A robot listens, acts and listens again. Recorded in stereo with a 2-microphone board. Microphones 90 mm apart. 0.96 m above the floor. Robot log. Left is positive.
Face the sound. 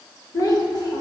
note: The child speaking: about 50° left or 130° left.
cmd yaw +50
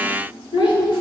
note: So it is at 65° left.
cmd yaw +65
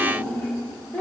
note: The child speaking is now 15° left.
cmd yaw +15
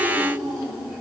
note: The child speaking is now 10° right.
cmd yaw -10
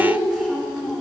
end: Found it: a child speaking, straight ahead, 2 to 4 m away.